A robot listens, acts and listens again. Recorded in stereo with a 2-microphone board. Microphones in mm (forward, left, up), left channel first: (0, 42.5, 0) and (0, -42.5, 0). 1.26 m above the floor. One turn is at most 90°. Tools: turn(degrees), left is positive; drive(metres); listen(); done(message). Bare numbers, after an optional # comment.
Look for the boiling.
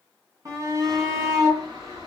turn(-90)
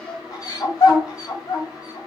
done("Found it: boiling, straight ahead.")